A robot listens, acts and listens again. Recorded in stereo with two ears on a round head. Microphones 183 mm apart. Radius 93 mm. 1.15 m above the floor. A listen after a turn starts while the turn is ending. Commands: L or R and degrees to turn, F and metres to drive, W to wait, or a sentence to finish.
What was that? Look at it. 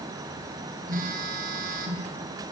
R45
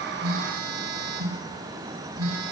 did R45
R90
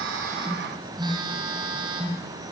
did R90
R20
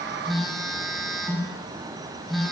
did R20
Found it: a phone buzzing, straight ahead, over 4 m away.